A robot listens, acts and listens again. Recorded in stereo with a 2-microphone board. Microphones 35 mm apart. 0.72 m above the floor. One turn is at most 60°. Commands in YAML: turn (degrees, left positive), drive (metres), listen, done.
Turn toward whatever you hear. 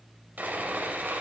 turn: -60
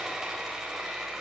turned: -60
turn: -10
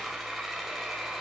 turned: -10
done: "Found it: sawing, straight ahead."